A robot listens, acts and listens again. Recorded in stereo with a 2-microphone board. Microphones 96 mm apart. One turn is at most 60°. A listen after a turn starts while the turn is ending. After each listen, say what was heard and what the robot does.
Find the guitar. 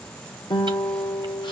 The guitar: about 50° left or 130° left. Turn 50° left.
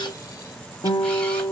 So it is at 75° left. Turn 60° left.
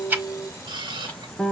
Facing the guitar.